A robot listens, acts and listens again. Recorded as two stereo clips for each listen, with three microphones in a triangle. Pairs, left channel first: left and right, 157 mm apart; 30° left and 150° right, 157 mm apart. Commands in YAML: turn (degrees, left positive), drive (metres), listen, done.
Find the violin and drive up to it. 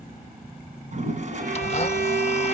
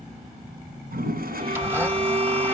turn: -100
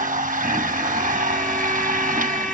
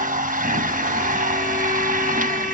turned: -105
listen: true
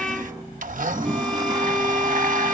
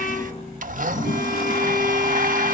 drive: 1.0
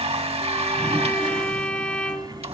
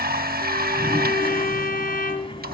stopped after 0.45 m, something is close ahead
turn: 10
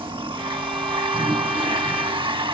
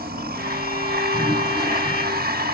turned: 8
listen: true
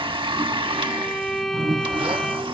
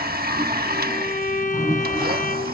done: "Something is in my way. I am facing the violin but have not reached it."